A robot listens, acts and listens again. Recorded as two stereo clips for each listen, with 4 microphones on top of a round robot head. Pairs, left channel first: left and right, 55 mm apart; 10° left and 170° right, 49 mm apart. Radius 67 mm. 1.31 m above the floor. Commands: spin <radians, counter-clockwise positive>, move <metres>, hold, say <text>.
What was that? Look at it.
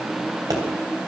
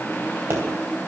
spin -2.18
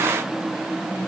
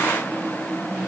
say I heard a pop from this way, but can't make it out now.